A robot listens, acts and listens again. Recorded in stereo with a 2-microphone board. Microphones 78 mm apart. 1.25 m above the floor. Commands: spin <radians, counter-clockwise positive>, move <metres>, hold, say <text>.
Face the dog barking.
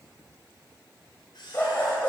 spin 0.35
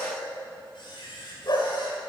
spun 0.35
spin 2.18
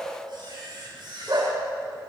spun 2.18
spin -1.05
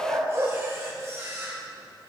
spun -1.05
spin -0.70
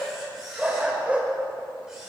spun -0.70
spin -0.26
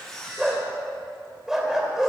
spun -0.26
say Facing the dog barking.